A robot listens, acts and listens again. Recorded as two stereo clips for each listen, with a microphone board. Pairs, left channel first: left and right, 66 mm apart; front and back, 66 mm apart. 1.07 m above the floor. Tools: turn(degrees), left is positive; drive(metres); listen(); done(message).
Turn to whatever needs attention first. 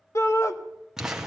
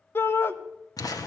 turn(degrees=50)
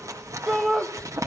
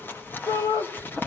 done("Facing the shout, 1 to 2 m away.")